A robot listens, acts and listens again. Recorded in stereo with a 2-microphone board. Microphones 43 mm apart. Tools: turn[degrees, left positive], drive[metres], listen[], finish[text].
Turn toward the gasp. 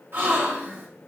Thought: The gasp: about 50° right or 130° right.
Action: turn[-50]
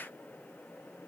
Action: listen[]
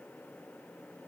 Action: finish[I heard a gasp, but can't make it out now. It was about straight ahead or 80° right.]